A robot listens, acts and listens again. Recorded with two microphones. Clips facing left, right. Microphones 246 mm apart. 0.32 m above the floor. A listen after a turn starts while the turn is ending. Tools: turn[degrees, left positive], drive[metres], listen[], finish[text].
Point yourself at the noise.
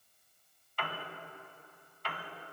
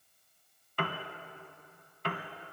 Thought: The piano: about 55° right or 125° right.
Action: turn[-55]
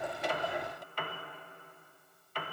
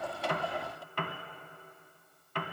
Thought: So it is at 65° right.
Action: turn[-65]
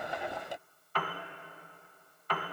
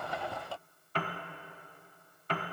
Thought: The piano is now 30° right.
Action: turn[-30]
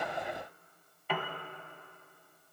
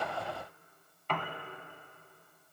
Thought: The piano is now 10° left.
Action: turn[10]
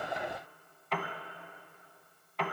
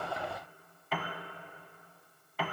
Action: finish[Facing the piano, 1 to 2 m away.]